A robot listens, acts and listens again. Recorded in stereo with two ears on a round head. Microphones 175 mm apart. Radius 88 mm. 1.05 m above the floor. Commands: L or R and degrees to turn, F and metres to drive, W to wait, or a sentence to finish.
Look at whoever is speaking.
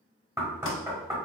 W
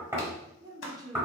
R20
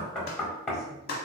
W
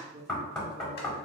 R140
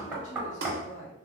L40
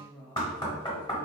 L10
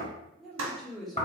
Facing the woman speaking.